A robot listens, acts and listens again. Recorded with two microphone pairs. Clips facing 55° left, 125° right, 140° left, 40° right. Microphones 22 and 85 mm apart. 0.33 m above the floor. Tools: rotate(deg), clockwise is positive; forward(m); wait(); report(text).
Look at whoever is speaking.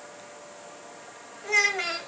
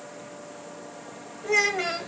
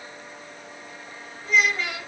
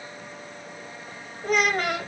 rotate(20)
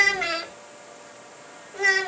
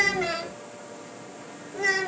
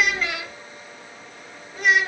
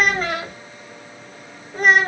report("Facing the child speaking.")